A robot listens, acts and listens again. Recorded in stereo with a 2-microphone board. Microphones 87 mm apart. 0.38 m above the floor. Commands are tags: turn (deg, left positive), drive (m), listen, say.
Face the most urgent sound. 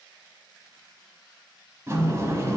<listen/>
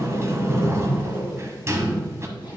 <listen/>
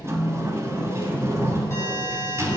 <turn deg="30"/>
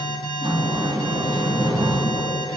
<turn deg="120"/>
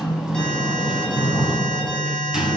<turn deg="10"/>
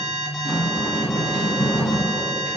<say>Facing the alarm, 1 to 2 m away.</say>